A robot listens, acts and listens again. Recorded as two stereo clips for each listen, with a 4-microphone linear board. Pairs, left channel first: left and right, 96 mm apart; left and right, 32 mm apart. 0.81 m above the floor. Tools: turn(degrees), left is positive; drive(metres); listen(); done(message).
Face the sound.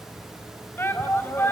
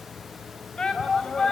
turn(degrees=25)
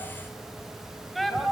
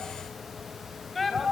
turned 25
done("Found it: a shout, straight ahead, 2 to 4 m away.")